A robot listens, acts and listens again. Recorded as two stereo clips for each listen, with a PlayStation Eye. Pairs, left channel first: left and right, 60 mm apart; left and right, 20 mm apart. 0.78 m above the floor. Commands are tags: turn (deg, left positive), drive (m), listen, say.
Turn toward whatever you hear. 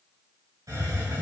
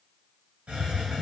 <turn deg="-90"/>
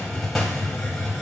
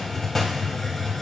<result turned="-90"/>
<say>Facing the hiss.</say>